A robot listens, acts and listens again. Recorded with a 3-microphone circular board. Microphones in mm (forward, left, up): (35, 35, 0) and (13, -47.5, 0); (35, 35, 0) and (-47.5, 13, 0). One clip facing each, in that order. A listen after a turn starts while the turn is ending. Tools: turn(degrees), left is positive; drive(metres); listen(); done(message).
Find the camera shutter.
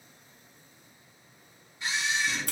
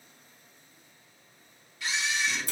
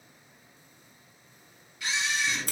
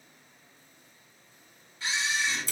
turn(degrees=135)
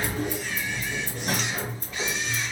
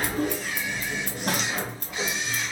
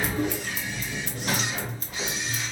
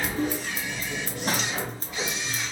listen()
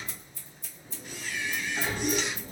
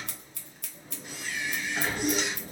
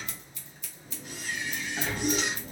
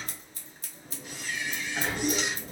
turn(degrees=-30)
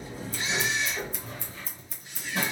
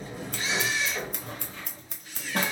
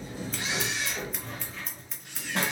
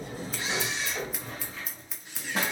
done("Facing the camera shutter, 1 to 2 m away.")